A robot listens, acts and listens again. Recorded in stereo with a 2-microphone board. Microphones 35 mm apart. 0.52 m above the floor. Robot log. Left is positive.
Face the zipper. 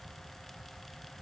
cmd idle
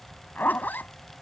note: The zipper: about 60° left or 120° left.
cmd yaw +60
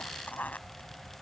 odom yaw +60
note: So it is at 55° left.
cmd yaw +55
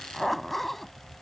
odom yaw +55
end: Found it: a zipper, straight ahead.